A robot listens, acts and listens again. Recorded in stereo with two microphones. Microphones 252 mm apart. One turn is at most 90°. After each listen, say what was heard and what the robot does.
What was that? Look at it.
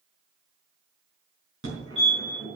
The fire alarm: about 55° right or 125° right. Turn 55° right.
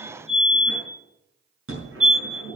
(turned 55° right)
So it is at 65° right. Turn 65° right.
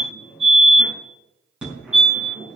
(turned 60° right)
Found it: a fire alarm, straight ahead.